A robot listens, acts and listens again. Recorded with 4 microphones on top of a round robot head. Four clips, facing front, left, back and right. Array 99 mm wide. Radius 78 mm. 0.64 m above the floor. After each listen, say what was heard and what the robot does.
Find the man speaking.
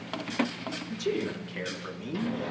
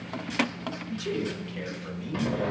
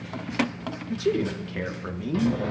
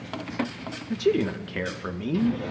The man speaking: 110° right. Turn 110° right.
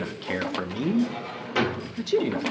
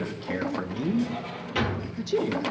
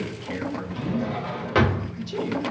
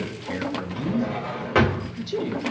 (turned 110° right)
The man speaking is now 15° left. Turn 15° left.
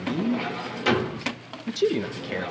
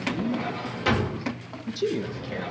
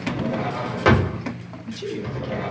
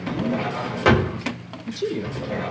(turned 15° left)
Found it: a man speaking, straight ahead.